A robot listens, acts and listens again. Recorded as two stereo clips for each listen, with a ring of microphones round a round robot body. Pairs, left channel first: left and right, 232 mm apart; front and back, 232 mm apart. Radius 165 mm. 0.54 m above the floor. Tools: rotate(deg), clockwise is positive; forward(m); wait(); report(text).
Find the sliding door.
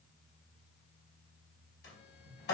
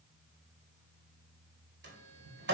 rotate(-140)
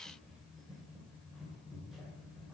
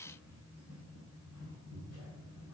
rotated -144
report("Facing the sliding door.")